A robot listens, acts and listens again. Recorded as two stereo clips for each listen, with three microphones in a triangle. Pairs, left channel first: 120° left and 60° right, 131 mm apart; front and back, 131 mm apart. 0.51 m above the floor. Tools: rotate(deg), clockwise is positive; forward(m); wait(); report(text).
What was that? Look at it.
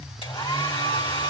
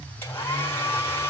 rotate(-75)
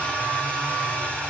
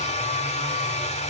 rotate(-40)
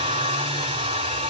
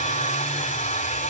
rotate(15)
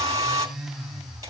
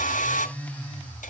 report("Found it: a hair dryer, straight ahead.")